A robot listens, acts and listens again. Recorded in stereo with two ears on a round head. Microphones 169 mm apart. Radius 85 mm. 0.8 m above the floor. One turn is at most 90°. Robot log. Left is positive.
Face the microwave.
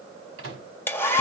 cmd yaw -90
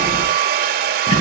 cmd idle
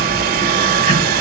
cmd idle
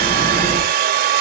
end: Facing where the microwave came from. I can't hear it now.